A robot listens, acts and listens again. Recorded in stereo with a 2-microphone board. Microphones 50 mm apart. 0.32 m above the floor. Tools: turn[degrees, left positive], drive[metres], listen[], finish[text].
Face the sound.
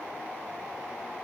Action: listen[]
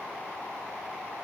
Action: listen[]
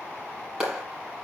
Action: turn[-30]
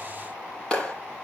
Thought: So it is at 15° left.
Action: turn[15]
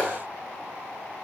Action: finish[Found it: a clap, straight ahead.]